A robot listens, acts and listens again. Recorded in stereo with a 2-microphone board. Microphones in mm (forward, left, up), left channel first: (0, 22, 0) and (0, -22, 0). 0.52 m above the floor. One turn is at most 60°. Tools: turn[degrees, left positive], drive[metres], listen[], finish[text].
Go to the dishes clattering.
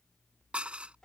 Thought: The dishes clattering: about 30° right or 150° right.
Action: turn[-30]
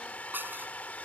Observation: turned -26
Thought: So it is at 125° right.
Action: turn[-60]
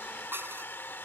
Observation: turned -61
Thought: The dishes clattering is now 65° right.
Action: turn[-60]
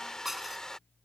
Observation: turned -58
Action: drive[1.0]
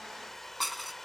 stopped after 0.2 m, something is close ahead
Action: finish[Blocked. The dishes clattering is further on, straight ahead.]